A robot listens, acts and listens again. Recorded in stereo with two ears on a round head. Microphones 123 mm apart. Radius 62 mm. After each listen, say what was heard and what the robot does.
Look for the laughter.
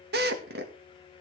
Keep listening.
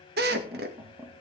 The laughter: about 20° right or 160° right. Turn 20° right.
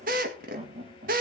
So it is at 135° right. Turn 135° right.
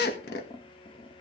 The laughter is now 35° left. Turn 35° left.
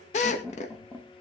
The laughter is now 15° left. Turn 15° left.
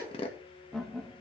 Facing the laughter.